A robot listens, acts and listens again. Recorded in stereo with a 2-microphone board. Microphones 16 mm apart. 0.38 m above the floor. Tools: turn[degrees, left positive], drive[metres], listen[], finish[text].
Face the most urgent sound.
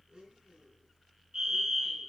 Thought: The fire alarm: about 35° right or 145° right.
Action: turn[-35]
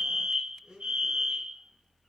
Thought: So it is at 105° right.
Action: turn[-105]
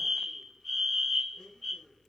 Action: finish[Found it: a fire alarm, straight ahead, 2 to 4 m away.]